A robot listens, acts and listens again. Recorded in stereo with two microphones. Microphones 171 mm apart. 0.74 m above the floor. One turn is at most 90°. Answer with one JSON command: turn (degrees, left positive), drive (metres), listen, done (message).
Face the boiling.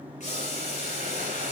{"turn": 45}
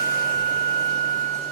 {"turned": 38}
{"listen": true}
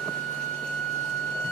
{"listen": true}
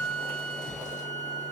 {"done": "I heard boiling, but can't make it out now. It was about 5° left or 100° left."}